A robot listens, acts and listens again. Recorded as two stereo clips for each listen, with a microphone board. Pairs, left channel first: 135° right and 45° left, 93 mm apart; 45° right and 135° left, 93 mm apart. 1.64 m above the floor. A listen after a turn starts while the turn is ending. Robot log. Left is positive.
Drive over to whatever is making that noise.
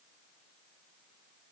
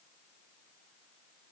cmd idle
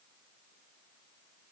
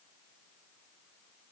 cmd idle
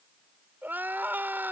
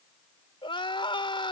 note: The crying: 25° right.
cmd yaw -25
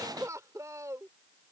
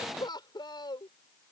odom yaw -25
note: The crying is now 10° right.
cmd yaw -10
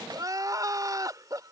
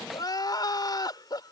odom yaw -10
cmd fwd 1.0
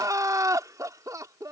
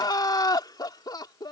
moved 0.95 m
cmd fwd 1.0
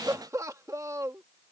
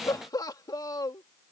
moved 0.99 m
cmd fwd 1.0
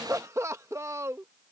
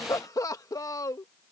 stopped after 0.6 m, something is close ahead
end: I am next to the crying.